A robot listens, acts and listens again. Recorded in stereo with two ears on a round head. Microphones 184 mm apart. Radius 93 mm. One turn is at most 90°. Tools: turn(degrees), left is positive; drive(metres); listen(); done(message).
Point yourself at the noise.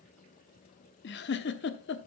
turn(degrees=50)
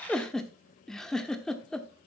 done("Found it: a giggle, straight ahead.")